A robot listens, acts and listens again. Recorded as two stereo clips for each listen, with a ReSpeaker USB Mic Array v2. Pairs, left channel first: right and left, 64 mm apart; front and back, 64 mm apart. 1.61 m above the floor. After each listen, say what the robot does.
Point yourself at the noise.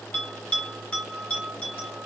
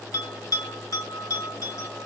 Turn 20° right.
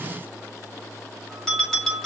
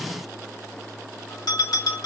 Found it: a bell, straight ahead.